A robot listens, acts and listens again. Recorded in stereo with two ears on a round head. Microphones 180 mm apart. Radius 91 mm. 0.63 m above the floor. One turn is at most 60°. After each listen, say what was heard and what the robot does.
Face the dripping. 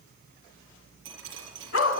The dripping: about 65° right or 115° right. Turn 60° right.
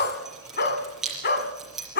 Facing the dripping.